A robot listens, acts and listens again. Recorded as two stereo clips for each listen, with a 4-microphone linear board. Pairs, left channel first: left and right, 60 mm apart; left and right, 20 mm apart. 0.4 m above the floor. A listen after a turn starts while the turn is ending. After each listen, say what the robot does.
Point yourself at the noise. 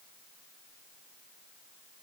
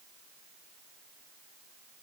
Keep listening.
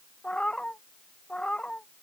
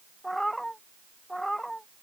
Turn 15° left.
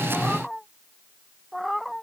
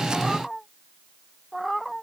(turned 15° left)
Turn 30° left.
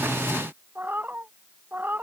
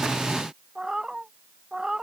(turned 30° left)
Turn 30° right.
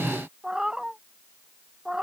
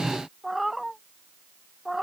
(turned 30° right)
Turn 10° right.
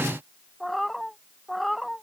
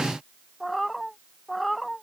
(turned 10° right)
Facing the cat meowing.